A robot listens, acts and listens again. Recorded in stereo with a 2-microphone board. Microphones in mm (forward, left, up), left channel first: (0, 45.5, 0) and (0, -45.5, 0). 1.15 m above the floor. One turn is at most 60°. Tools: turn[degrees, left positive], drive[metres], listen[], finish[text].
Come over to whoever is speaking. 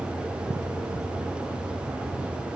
Action: listen[]
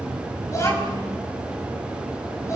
Thought: The child speaking: about 35° left or 145° left.
Action: turn[35]
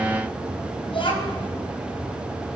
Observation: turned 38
Thought: So it is at 105° left.
Action: turn[60]
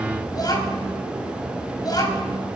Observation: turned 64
Thought: The child speaking is now 45° left.
Action: turn[45]
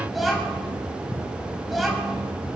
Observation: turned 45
Action: drive[1.0]
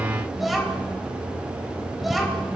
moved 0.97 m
Action: drive[1.0]
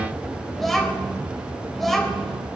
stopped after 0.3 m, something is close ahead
Action: finish[Blocked. The child speaking is further on, straight ahead.]